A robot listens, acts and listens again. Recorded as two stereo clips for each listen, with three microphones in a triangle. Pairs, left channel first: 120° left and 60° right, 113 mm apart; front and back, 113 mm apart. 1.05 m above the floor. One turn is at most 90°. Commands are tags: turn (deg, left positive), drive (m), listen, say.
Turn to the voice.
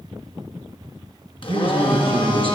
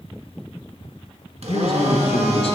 <turn deg="-25"/>
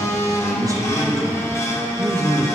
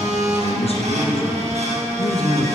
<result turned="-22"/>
<say>Facing the man speaking.</say>